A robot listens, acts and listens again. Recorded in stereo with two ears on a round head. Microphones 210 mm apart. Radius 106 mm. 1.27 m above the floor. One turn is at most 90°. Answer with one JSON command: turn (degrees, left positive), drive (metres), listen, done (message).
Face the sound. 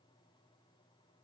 {"listen": true}
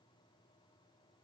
{"listen": true}
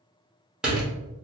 {"turn": -30}
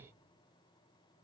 {"listen": true}
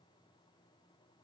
{"done": "I heard a door slam, but can't make it out now. It was about 25° left or 145° right."}